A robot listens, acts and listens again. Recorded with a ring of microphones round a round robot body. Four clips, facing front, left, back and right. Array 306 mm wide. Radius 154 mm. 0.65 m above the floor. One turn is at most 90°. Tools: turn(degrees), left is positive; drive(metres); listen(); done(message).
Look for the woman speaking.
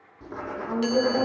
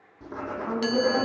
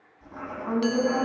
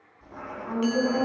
turn(degrees=90)
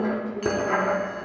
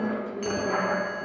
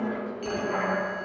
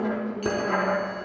turn(degrees=65)
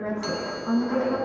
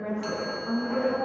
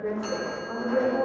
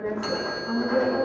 done("Found it: a woman speaking, straight ahead, over 4 m away.")